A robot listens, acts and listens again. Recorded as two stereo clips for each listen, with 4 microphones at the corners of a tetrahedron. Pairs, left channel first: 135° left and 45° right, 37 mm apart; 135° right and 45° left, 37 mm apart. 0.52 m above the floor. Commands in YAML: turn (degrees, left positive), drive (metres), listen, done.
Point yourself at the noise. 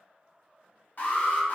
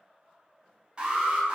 turn: 110
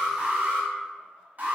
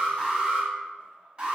turn: -15
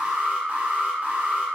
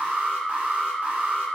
done: "Facing the alarm, 1 to 2 m away."